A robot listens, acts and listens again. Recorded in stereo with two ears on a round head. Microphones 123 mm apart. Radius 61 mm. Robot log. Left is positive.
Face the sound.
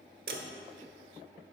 cmd yaw -90
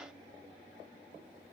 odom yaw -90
end: Facing where the dropped coin came from. I can't hear it now.